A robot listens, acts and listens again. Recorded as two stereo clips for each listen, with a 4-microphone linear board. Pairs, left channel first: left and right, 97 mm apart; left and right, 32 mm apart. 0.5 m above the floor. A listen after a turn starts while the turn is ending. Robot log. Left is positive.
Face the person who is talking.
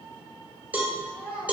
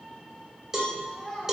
cmd yaw -30
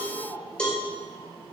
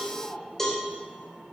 note: So it is at 140° right.
cmd yaw -140
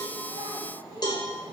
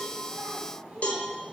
cmd idle
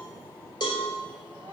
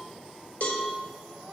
cmd idle
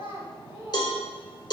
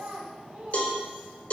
note: The child speaking is now 30° right.
cmd yaw -30
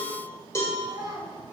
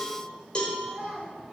end: Facing the child speaking, 2 to 4 m away.